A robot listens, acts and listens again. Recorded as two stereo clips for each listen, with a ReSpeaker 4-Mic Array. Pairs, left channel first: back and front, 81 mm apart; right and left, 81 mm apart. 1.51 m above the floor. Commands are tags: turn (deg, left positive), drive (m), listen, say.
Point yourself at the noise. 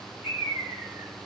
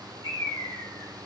<turn deg="-60"/>
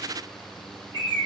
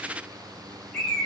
<turn deg="-15"/>
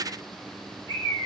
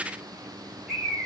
<say>Facing the bird.</say>